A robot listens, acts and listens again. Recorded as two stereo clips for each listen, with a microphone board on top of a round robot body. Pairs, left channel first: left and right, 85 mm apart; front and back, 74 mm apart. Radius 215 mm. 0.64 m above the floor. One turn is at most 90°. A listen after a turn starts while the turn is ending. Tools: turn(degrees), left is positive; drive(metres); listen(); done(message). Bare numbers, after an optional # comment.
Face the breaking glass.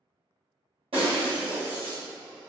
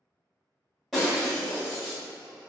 # The breaking glass: 90° right.
turn(-90)
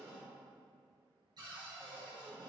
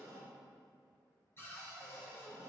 done("Facing where the breaking glass came from. I can't hear it now.")